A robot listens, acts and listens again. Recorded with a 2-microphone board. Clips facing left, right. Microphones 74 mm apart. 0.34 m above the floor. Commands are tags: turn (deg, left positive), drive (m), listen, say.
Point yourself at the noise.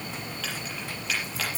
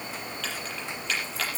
<turn deg="30"/>
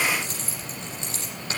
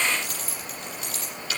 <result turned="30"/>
<turn deg="145"/>
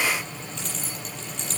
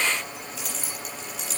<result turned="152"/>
<say>Facing the keys jangling, over 4 m away.</say>